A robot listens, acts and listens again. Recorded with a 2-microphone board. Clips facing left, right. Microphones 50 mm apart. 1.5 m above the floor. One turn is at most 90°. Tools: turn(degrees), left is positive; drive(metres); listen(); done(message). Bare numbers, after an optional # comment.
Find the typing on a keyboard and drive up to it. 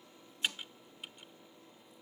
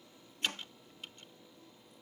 turn(30)
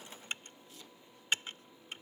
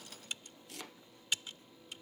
# So it is at 140° left.
turn(90)
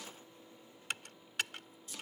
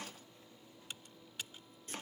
# The typing on a keyboard is now 85° left.
turn(85)
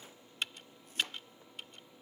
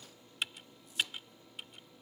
drive(1.0)
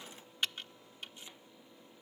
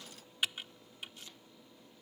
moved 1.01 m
# The typing on a keyboard is now 10° right.
turn(-10)
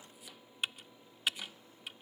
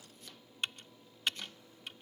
drive(1.0)
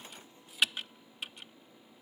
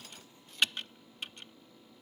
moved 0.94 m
drive(1.0)
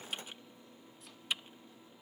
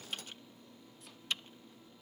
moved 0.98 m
# The typing on a keyboard is now 10° left.
turn(10)
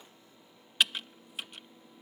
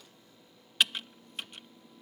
drive(1.0)
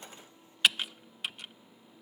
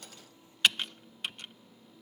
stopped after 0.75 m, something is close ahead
done("Arrived at the typing on a keyboard, straight ahead.")